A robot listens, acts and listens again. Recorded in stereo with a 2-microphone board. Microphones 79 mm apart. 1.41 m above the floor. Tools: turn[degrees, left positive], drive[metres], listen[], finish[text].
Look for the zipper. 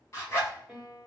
Thought: The zipper: about 30° left or 150° left.
Action: turn[30]
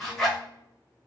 Action: finish[Found it: a zipper, straight ahead.]